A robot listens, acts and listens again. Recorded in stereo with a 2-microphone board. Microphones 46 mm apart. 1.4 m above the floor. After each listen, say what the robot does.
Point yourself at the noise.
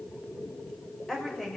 Turn 30° left.
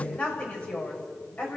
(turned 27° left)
Turn 150° left.
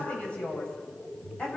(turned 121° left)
Turn 25° left.
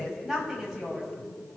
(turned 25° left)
Facing the woman speaking.